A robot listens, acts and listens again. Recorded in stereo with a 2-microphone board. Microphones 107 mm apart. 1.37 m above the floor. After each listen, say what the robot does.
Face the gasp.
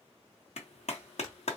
Keep listening.
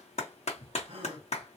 Turn 55° right.
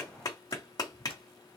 Keep listening.
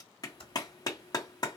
I heard a gasp, but can't make it out now. It was about straight ahead or 70° right.